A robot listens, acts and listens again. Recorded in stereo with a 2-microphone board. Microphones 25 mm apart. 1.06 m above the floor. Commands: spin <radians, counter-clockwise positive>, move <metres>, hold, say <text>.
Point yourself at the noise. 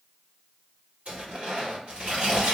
spin -1.57
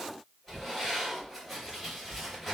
say Facing the tearing paper.